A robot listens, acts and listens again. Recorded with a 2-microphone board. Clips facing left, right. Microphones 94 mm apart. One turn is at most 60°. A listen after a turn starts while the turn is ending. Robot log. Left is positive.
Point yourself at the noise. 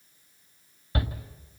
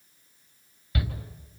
note: The shout: about 35° left or 145° left.
cmd yaw +35
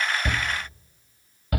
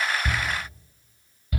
note: So it is at 105° left.
cmd yaw +60
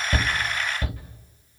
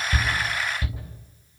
note: The shout is now 45° left.
cmd yaw +45
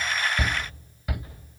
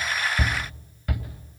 end: Found it: a shout, straight ahead, 2 to 4 m away.